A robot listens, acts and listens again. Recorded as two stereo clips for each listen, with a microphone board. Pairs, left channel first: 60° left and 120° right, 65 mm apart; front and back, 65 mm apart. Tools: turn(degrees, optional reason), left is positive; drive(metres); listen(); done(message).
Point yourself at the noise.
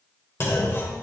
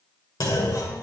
turn(degrees=15, reason="The clunk: 15° left.")
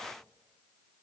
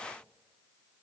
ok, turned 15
done("I heard a clunk from this way, but can't make it out now.")